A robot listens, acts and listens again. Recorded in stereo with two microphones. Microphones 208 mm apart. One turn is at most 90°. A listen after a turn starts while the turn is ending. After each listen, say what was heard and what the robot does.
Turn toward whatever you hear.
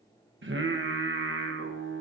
The singing: about 65° right or 115° right. Turn 65° right.
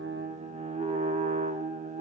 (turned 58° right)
So it is at 40° right. Turn 40° right.
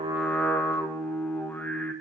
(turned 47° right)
The singing is now 10° left. Turn 10° left.
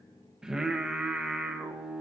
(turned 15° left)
Found it: singing, straight ahead.